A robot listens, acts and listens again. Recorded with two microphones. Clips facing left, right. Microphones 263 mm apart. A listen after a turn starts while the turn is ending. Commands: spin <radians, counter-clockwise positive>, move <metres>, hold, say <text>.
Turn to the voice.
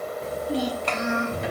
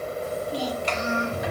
spin 1.05
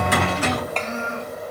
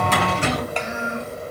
spin -0.26
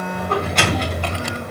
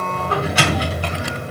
hold
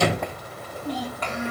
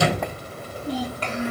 spin -0.61
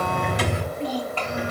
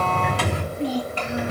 spin -0.26
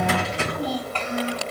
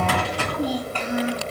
spin -0.17
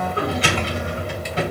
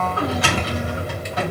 hold
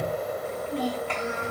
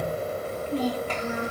say Facing the child speaking.